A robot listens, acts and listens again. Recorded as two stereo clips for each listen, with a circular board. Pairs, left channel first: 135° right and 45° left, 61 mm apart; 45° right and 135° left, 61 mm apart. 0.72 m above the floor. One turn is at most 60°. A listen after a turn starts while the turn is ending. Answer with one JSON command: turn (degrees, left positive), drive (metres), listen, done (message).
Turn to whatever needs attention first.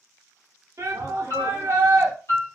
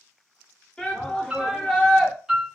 {"turn": 30}
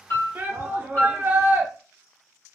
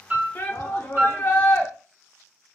{"done": "Found it: a shout, straight ahead, 1 to 2 m away."}